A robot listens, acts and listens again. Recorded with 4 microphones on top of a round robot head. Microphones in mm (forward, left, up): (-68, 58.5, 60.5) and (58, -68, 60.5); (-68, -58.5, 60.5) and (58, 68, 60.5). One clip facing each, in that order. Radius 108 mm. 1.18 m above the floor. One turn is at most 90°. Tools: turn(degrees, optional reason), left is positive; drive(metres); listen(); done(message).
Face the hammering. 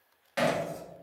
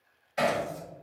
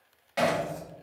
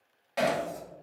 turn(degrees=90, reason="The hammering: 135° left.")
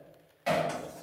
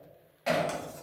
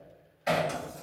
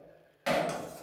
turn(degrees=45, reason="The hammering is now 45° left.")
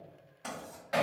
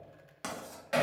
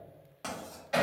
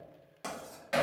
turn(degrees=15, reason="The hammering is now 15° left.")
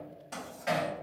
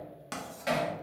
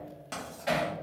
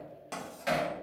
done("Found it: hammering, straight ahead, 1 to 2 m away.")